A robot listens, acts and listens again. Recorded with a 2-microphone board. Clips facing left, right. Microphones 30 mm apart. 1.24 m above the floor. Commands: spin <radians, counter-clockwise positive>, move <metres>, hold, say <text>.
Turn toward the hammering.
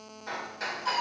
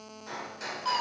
spin 0.44
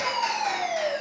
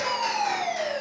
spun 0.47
hold
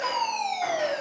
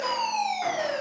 hold
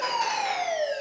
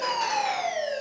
say I heard hammering, but can't make it out now. It was about 5° right or 130° left.